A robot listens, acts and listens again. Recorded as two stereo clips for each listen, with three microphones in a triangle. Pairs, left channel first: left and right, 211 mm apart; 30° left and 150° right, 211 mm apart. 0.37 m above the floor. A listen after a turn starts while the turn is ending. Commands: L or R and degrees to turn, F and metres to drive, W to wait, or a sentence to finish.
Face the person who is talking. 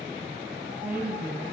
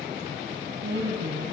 R170
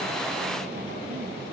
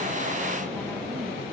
W
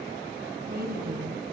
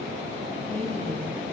R55
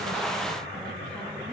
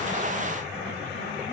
W
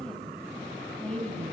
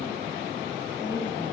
Facing the woman speaking, 2 to 4 m away.